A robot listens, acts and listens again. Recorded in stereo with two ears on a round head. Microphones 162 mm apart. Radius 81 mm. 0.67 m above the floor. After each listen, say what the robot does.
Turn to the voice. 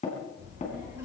Turn 15° right.
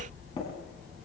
Turn 30° right.
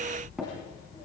Turn 25° left.
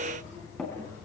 Turn 20° left.
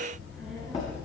Facing the child speaking, over 4 m away.